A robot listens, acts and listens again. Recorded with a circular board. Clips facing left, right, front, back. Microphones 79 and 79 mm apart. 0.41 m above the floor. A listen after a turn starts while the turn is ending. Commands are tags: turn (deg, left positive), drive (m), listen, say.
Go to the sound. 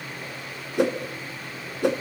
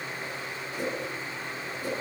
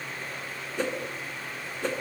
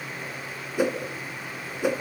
<turn deg="100"/>
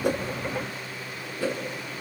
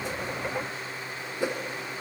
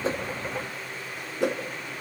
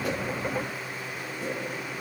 <turn deg="-20"/>
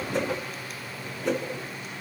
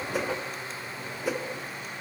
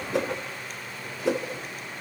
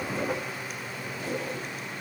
<drive m="1.0"/>
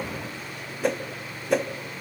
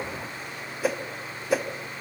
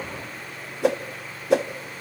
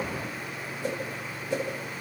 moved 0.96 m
<drive m="1.0"/>
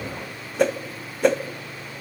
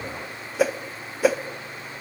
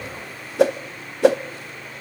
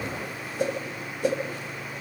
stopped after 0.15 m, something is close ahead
<say>Arrived at the whoosh, straight ahead.</say>